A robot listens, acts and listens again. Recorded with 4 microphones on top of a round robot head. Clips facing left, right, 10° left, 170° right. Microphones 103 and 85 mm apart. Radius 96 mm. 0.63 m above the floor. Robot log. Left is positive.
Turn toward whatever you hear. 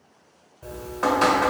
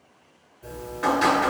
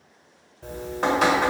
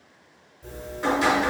note: The dripping: 40° left.
cmd yaw +40
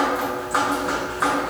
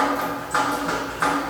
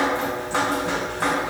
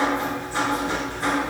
end: Facing the dripping.